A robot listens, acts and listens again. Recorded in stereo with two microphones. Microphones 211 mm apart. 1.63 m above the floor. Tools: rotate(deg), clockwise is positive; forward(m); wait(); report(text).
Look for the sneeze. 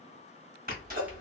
rotate(45)
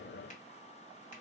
wait()
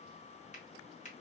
report("I heard a sneeze, but can't make it out now. It was about straight ahead or 90° right.")